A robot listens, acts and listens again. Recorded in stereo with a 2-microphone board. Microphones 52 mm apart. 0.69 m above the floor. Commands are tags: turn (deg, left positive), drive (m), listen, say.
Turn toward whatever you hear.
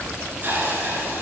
<turn deg="-35"/>
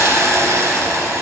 <turn deg="-105"/>
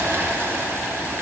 <turn deg="-55"/>
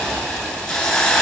<turn deg="10"/>
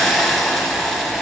<say>Facing the hiss.</say>